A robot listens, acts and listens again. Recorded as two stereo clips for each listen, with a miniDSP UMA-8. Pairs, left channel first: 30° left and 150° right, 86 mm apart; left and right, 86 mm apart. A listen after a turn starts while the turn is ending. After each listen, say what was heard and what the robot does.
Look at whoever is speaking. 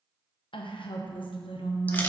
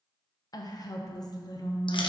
The woman speaking: 45° left. Turn 45° left.
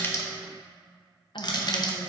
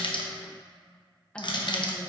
Keep listening.
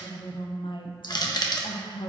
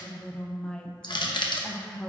The woman speaking is now 10° left. Turn 10° left.
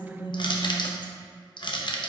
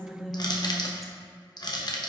Facing the woman speaking, under 1 m away.